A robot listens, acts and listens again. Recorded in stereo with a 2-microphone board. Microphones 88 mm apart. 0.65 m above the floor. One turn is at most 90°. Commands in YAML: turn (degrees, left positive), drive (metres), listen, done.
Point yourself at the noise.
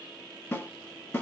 turn: 30
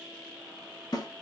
turn: 90
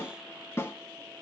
turn: 35
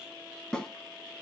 turn: 10
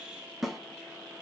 done: "Found it: a snare drum, straight ahead."